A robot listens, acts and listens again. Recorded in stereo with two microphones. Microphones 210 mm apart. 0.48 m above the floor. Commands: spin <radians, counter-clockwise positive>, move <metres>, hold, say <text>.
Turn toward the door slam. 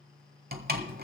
spin -0.87
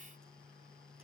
hold
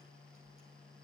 say I heard a door slam, but can't make it out now. It was about straight ahead or 80° right.